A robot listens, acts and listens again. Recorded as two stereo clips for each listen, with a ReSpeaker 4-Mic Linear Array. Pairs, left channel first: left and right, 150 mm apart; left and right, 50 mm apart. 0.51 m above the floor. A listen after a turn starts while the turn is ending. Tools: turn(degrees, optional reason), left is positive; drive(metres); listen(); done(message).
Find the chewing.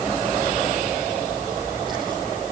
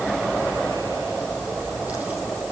listen()
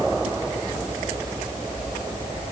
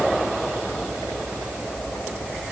listen()
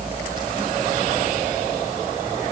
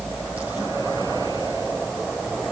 done("I can't make out chewing.")